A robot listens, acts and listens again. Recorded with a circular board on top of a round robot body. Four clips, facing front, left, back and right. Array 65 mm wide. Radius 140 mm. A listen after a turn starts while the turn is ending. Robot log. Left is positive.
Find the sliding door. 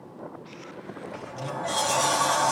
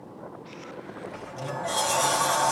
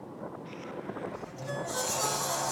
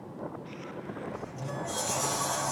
note: The sliding door: 30° left.
cmd yaw +30
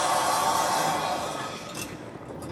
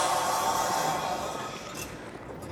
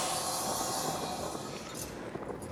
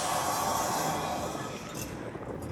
note: The sliding door is now 10° left.
cmd yaw +10
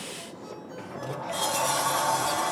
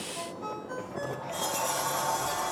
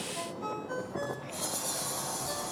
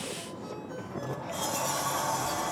end: Facing the sliding door, 2 to 4 m away.